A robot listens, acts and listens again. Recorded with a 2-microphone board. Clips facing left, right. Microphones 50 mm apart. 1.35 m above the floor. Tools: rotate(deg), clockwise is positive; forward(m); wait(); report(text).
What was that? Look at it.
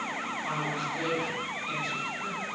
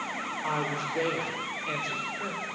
rotate(55)
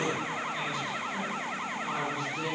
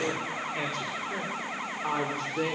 rotate(55)
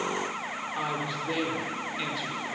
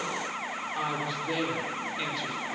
report("Found it: a woman speaking, straight ahead.")